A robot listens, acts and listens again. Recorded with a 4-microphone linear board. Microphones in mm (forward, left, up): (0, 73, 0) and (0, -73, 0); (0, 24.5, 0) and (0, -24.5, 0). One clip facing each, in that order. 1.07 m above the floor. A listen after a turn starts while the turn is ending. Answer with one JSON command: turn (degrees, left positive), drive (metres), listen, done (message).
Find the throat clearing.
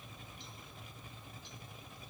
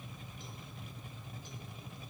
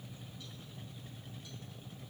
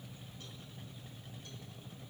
{"listen": true}
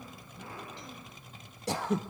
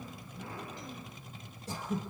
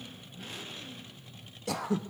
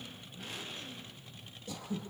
{"turn": 90}
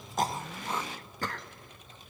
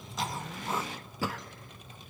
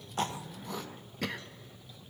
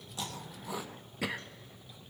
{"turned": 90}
{"done": "Found it: throat clearing, straight ahead, under 1 m away."}